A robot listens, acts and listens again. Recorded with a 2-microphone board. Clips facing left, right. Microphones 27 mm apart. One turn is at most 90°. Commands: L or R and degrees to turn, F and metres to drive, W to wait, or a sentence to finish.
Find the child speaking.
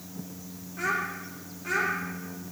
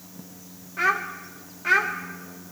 R45
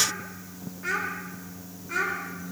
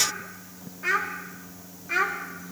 R20
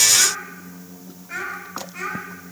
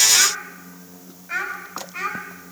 R15
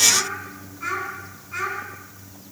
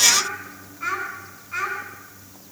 Facing the child speaking.